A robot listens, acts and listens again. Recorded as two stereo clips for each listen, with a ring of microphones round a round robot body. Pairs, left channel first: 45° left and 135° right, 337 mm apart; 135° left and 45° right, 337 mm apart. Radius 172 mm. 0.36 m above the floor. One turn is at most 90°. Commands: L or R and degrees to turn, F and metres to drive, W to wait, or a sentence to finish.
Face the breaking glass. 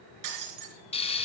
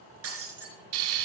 R90
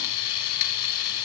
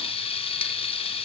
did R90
R10
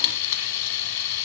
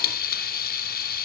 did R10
Facing where the breaking glass came from. I can't hear it now.